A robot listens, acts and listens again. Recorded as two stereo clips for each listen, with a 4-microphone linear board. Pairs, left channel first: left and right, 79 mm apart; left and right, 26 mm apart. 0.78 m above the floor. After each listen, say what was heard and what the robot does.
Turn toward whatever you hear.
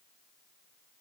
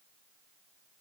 Keep listening.
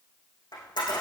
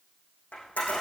The camera shutter: about 65° left or 115° left. Turn 65° left.
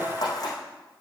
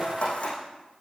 So it is at 50° left. Turn 50° left.
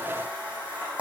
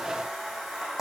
The camera shutter is now 15° right. Turn 15° right.
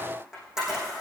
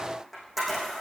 Facing the camera shutter, over 4 m away.